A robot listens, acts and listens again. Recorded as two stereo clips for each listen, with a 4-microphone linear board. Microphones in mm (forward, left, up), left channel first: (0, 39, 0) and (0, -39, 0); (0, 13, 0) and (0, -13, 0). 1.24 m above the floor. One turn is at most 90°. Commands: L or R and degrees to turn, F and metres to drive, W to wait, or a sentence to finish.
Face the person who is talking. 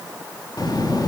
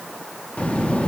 L55
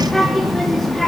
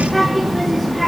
Facing the child speaking, 1 to 2 m away.